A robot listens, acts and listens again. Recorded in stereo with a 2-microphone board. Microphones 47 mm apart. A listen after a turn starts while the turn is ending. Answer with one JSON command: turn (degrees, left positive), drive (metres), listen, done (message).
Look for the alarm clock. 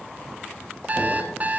{"turn": -35}
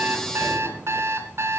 {"turn": -110}
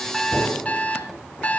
{"turn": 30}
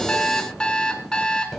{"turn": 20}
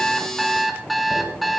{"done": "Facing the alarm clock, 2 to 4 m away."}